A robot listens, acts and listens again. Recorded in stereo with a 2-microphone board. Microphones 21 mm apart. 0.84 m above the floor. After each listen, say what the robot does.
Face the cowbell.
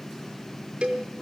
Turn 90° right.
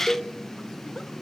Turn 15° right.
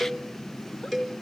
Facing the cowbell.